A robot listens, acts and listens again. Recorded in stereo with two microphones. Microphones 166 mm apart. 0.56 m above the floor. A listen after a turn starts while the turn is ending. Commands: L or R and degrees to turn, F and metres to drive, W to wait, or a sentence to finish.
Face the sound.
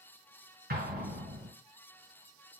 R75
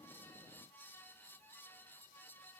W
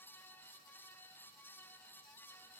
I heard an explosion, but can't make it out now. It was about straight ahead or 30° right.